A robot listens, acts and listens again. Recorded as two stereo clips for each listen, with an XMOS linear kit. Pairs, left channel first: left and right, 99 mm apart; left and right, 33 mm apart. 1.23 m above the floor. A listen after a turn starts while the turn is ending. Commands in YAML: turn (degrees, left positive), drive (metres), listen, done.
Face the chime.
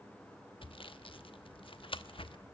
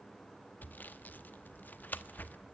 listen: true
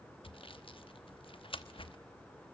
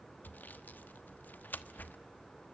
listen: true
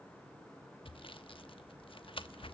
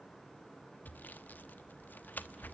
done: "I can't make out a chime to turn to."